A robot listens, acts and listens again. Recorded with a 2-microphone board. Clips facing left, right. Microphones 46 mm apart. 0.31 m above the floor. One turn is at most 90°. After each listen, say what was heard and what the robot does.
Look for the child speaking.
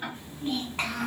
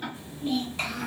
The child speaking: about 55° left or 125° left. Turn 55° left.
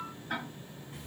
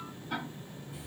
So it is at 65° left. Turn 65° left.
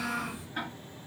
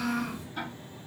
The child speaking is now 15° left. Turn 15° left.
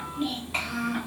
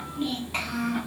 Facing the child speaking, 1 to 2 m away.